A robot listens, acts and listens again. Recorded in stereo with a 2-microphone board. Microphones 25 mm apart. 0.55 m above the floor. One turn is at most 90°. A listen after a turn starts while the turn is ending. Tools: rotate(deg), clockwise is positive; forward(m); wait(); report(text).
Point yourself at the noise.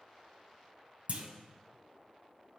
rotate(55)
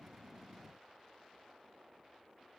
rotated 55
wait()
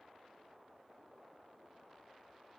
report("I heard a clunk, but can't make it out now. It was about straight ahead or 70° right.")